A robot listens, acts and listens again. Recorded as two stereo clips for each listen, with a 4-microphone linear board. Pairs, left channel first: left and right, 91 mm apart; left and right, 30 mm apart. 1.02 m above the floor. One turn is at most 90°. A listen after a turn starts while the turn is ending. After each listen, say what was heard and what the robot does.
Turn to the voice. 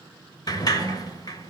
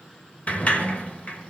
Keep listening.
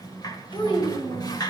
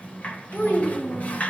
Turn 90° left.
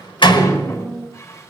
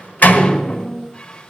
Facing the child speaking.